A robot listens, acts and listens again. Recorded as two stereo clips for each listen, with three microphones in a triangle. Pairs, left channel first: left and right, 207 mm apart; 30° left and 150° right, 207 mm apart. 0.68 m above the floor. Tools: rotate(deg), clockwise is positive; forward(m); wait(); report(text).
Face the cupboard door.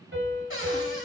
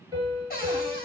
rotate(-70)
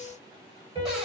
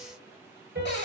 report("Found it: a cupboard door, straight ahead, 2 to 4 m away.")